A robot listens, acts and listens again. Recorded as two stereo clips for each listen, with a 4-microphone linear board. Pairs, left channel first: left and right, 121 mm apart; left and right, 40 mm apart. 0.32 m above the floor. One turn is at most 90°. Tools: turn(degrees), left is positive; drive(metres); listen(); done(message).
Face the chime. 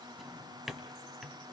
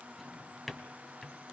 listen()
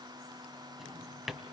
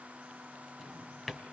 listen()
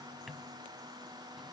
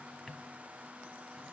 done("I can't make out a chime to turn to.")